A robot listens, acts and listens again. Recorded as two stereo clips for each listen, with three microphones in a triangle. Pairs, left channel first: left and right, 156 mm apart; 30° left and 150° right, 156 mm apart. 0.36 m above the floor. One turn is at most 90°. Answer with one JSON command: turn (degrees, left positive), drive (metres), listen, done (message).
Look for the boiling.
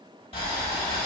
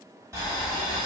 {"turn": 90}
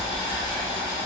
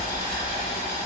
{"turn": 35}
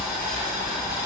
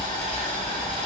{"turn": -10}
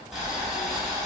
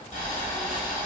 {"done": "Facing the boiling."}